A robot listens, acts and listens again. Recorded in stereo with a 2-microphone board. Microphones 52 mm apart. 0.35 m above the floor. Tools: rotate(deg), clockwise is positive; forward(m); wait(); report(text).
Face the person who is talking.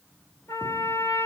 wait()
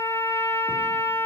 wait()
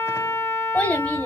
rotate(-25)
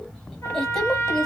rotate(-10)
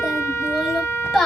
report("Found it: a child speaking, straight ahead, 1 to 2 m away.")